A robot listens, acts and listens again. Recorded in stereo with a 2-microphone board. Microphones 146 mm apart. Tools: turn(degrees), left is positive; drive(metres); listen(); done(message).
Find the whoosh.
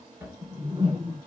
turn(degrees=-35)
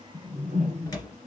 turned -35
turn(degrees=-100)
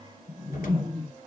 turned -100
turn(degrees=-40)
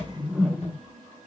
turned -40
done("Facing the whoosh, 1 to 2 m away.")